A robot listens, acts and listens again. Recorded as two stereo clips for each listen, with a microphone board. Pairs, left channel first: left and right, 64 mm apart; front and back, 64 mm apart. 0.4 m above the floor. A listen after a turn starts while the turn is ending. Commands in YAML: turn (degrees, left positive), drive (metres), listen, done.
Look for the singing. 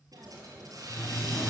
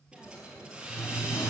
turn: 20
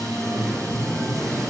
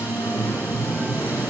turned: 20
done: "Found it: singing, straight ahead."